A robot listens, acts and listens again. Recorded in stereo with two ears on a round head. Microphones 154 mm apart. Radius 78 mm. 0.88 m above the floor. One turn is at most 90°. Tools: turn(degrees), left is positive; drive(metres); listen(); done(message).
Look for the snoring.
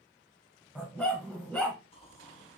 turn(degrees=35)
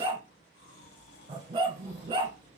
turn(degrees=90)
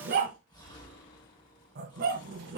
turn(degrees=25)
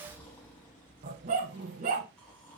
turn(degrees=10)
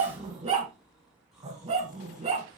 done("Found it: snoring, straight ahead.")